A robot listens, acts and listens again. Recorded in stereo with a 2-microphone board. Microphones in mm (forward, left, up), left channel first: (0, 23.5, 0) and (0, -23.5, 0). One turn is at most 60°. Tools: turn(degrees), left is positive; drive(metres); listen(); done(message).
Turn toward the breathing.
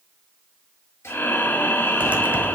turn(degrees=45)
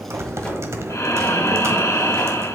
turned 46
turn(degrees=60)
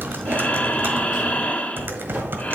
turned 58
turn(degrees=30)
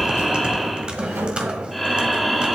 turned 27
done("Facing the breathing, 1 to 2 m away.")